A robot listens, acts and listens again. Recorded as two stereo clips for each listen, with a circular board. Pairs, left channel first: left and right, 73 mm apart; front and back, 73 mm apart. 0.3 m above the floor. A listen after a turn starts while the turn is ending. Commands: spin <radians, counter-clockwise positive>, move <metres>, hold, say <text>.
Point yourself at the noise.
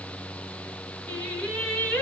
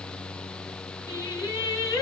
spin 0.35
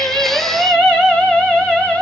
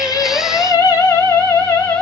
say Found it: singing, straight ahead.